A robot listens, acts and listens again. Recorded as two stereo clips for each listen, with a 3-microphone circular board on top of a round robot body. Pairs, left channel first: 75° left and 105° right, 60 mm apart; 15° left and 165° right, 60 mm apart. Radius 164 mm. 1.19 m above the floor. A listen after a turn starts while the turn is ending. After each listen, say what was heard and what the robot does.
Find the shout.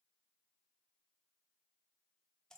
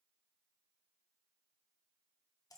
Keep listening.
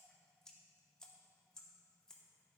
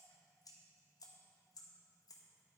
Keep listening.
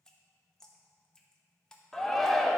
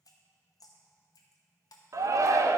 The shout: 160° left. Turn 160° left.
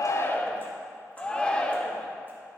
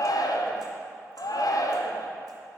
Facing the shout.